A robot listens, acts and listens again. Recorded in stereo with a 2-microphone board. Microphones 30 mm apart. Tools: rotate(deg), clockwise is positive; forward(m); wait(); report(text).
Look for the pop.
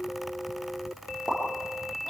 rotate(-35)
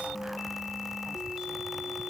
wait()
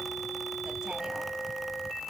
report("I heard a pop, but can't make it out now. It was about straight ahead or 110° left.")